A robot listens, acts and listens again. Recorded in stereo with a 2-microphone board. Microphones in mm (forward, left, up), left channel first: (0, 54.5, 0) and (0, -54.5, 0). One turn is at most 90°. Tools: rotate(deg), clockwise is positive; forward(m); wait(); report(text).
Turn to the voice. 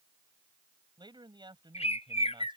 rotate(45)
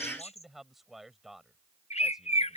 report("Facing the man speaking.")